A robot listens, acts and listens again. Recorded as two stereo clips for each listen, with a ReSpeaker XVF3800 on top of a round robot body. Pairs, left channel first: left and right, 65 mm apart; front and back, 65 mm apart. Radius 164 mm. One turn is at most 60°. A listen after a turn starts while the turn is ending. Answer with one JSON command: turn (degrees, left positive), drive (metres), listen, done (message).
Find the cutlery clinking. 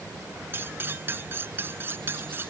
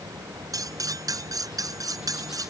{"turn": -60}
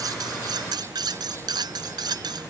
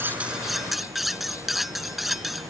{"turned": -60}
{"turn": -60}
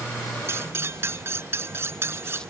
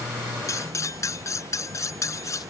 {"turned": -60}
{"turn": -40}
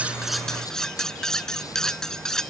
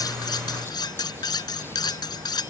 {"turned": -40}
{"turn": 10}
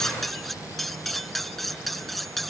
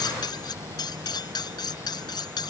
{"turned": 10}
{"done": "Found it: cutlery clinking, straight ahead."}